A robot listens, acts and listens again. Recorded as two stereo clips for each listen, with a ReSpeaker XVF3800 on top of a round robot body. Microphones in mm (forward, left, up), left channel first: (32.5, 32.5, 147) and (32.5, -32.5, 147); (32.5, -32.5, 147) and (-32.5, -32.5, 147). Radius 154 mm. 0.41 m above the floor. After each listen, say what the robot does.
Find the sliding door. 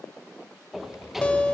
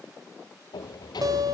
Found it: a sliding door, straight ahead, 2 to 4 m away.